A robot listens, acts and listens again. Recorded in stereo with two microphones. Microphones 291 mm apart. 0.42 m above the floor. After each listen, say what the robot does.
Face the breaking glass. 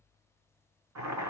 Keep listening.
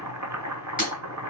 Turn 25° left.
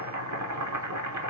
Keep listening.
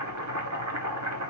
I heard breaking glass, but can't make it out now. It was about straight ahead or 130° left.